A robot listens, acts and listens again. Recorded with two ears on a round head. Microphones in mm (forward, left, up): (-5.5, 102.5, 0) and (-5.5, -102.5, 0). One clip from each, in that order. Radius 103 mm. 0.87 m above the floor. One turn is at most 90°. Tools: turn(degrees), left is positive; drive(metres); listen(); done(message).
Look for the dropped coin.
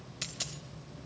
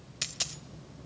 turn(degrees=-25)
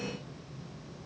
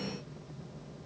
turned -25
listen()
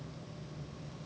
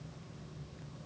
done("I heard a dropped coin, but can't make it out now. It was about straight ahead or 130° right.")